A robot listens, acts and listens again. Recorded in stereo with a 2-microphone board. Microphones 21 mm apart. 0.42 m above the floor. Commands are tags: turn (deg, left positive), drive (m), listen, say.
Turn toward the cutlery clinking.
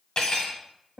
<turn deg="35"/>
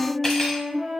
<listen/>
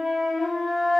<listen/>
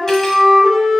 <say>I heard cutlery clinking, but can't make it out now. It was about straight ahead or 110° left.</say>